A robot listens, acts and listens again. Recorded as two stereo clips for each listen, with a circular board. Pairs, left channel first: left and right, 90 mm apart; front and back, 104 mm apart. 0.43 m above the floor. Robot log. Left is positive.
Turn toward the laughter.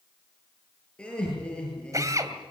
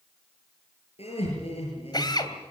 note: The laughter: 10° left.
cmd yaw +10
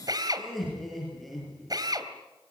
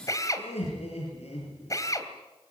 end: Found it: laughter, straight ahead.